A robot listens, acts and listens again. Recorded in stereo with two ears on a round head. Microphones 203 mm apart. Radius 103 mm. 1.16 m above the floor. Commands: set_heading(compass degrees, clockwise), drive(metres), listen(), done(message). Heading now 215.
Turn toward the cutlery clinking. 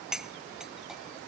set_heading(245)
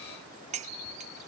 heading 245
set_heading(30)
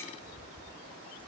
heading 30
listen()
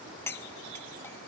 set_heading(20)
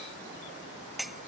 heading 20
done("Found it: cutlery clinking, straight ahead.")